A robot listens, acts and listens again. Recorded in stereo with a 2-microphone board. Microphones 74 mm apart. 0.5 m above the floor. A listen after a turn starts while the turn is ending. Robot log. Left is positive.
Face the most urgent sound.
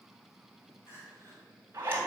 note: The crying: about 35° left or 145° left.
cmd yaw +35
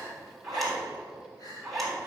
note: So it is at 110° left.
cmd yaw +110
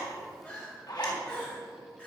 note: The crying is now 20° left.
cmd yaw +20
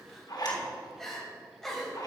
end: Facing the crying, 2 to 4 m away.